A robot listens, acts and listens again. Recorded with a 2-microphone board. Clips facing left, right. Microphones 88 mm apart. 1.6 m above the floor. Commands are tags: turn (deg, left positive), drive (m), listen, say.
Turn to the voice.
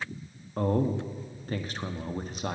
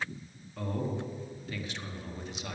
<turn deg="45"/>
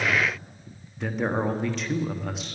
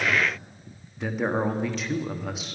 <say>Found it: a man speaking, straight ahead, 1 to 2 m away.</say>